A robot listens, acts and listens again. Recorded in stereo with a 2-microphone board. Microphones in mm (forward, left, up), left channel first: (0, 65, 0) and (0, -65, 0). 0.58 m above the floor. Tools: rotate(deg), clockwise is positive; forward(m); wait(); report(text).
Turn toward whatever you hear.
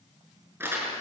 rotate(20)
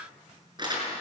rotate(145)
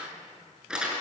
report("Found it: crumpling, straight ahead, over 4 m away.")